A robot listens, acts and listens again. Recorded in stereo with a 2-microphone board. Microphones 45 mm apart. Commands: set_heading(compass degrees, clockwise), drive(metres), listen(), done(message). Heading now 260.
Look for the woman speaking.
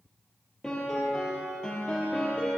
listen()
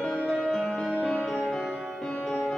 listen()
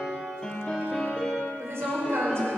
set_heading(350)
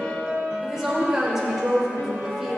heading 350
set_heading(0)
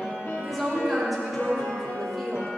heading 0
done("Facing the woman speaking.")